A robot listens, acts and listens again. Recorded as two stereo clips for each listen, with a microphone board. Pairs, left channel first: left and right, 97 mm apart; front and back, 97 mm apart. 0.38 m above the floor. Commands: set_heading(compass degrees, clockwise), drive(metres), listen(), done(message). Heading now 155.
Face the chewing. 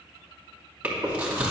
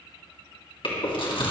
set_heading(170)
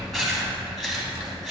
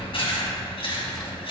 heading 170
done("Found it: chewing, straight ahead.")